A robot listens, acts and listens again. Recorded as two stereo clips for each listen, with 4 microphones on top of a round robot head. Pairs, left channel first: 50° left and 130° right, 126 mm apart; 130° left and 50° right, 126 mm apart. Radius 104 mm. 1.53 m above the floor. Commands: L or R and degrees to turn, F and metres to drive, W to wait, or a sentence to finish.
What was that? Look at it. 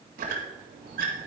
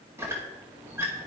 R120
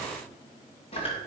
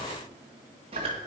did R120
Found it: a squeak, straight ahead, 1 to 2 m away.